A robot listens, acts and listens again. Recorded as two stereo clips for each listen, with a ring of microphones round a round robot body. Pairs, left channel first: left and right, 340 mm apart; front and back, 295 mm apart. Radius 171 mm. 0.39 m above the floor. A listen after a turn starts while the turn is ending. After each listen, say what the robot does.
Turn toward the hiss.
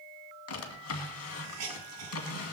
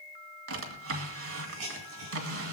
Turn 130° right.
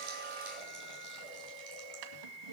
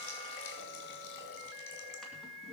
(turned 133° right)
Keep listening.
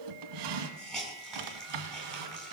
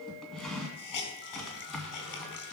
Found it: a hiss, straight ahead.